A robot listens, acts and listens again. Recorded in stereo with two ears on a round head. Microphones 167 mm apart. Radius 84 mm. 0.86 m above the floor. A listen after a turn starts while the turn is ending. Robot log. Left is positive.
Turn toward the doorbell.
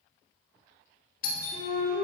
note: The doorbell: about 55° left or 125° left.
cmd yaw +55
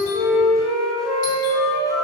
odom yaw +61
cmd idle
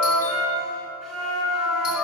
cmd idle
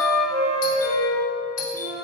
note: So it is at 55° left.
cmd yaw +55
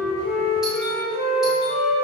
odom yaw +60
cmd idle
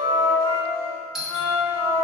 end: Found it: a doorbell, straight ahead, 1 to 2 m away.